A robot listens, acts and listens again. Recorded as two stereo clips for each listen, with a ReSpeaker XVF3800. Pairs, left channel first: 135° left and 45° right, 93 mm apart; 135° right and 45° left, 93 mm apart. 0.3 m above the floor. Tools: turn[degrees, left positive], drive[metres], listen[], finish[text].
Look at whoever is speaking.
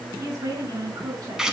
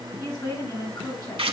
Thought: The woman speaking: 95° right.
Action: turn[-95]
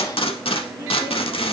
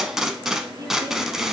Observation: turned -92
Action: listen[]
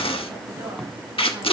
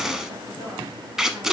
Action: listen[]
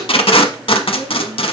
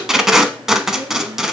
Action: finish[Facing where the woman speaking came from. I can't hear it now.]